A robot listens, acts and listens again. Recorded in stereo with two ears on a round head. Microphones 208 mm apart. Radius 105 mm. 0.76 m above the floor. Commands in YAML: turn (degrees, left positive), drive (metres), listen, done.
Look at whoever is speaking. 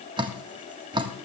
listen: true
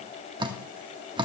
listen: true
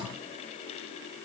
done: "I can't make out anyone speaking, only dripping."